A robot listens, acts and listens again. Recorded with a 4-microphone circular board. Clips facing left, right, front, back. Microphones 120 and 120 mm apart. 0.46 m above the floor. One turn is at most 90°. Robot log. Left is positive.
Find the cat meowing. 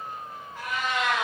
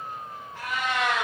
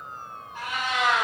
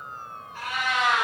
note: The cat meowing: 75° right.
cmd yaw -75
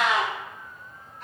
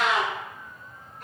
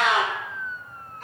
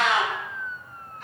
note: The cat meowing is now 45° right.
cmd yaw -45
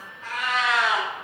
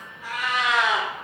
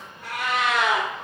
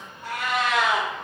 note: The cat meowing is now 20° right.
cmd yaw -20
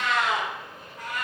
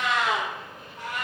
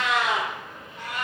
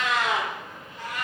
note: The cat meowing is now 30° right.
cmd yaw -30
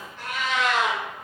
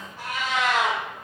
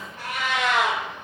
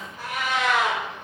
note: The cat meowing is now 10° right.
cmd yaw -10
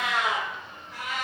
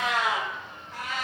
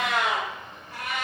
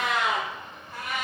end: Found it: a cat meowing, straight ahead.